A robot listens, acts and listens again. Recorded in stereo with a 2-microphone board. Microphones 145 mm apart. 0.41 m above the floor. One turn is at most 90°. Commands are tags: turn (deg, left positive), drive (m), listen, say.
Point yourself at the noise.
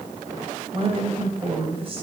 <turn deg="-40"/>
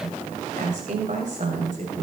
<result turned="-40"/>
<turn deg="-90"/>
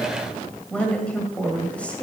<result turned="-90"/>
<turn deg="10"/>
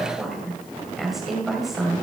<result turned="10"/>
<say>Facing the woman speaking.</say>